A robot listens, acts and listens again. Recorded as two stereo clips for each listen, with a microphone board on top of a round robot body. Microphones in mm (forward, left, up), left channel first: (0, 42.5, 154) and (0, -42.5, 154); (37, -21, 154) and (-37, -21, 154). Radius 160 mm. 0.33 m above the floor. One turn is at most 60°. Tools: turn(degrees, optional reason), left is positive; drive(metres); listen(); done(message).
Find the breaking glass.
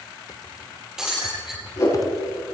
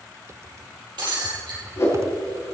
turn(degrees=-60, reason="The breaking glass: 175° right.")
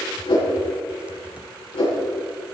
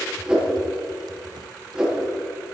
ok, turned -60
turn(degrees=-60, reason="Nothing new. It was at 115° right.")
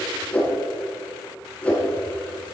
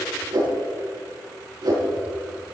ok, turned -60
turn(degrees=-55, reason="Nothing new. It was at 55° right.")
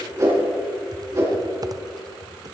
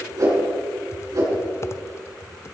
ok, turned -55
done("Facing where the breaking glass came from. I can't hear it now.")